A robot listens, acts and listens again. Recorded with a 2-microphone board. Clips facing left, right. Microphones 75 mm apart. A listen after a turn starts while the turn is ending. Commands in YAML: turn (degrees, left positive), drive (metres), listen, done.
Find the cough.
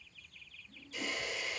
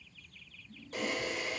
listen: true
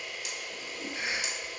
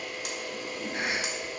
turn: -55
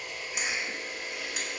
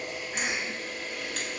turn: -60
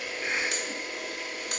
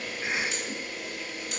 done: "Found it: a cough, straight ahead, 1 to 2 m away."